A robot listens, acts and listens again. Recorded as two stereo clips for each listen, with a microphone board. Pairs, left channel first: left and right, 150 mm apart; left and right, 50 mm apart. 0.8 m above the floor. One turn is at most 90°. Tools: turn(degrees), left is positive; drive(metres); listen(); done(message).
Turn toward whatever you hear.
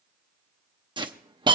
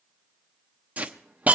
turn(degrees=-35)
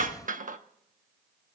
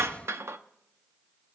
turn(degrees=-90)
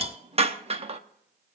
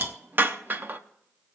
turn(degrees=-45)
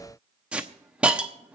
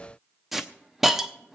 done("Facing the hiss.")